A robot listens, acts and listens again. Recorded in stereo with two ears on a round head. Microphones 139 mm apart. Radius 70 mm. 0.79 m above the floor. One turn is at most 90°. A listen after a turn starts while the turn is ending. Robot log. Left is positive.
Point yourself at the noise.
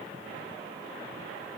cmd idle
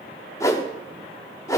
note: The whoosh: about 20° left or 160° left.
cmd yaw +20
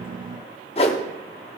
note: So it is at 135° left.
cmd yaw +90
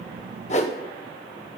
note: The whoosh is now 50° left.
cmd yaw +50
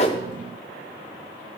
cmd idle
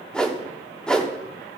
end: Found it: a whoosh, straight ahead.